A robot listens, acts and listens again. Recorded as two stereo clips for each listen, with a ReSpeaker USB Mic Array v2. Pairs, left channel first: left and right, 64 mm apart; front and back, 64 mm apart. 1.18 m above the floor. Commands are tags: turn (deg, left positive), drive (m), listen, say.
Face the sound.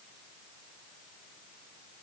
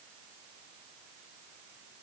<listen/>
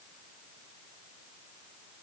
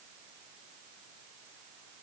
<listen/>
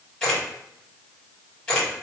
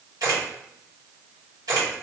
<turn deg="165"/>
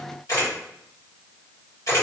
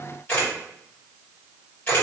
<turn deg="55"/>
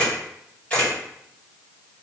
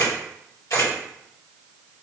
<turn deg="20"/>
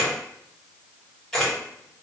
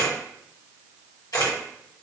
<say>Facing the camera shutter.</say>